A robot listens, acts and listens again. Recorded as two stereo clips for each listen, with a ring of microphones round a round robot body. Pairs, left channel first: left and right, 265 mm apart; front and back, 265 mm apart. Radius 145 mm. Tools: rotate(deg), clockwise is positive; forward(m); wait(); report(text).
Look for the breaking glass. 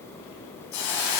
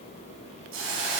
wait()
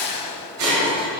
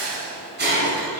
rotate(130)
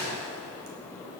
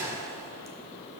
report("I heard breaking glass from this way, but can't make it out now.")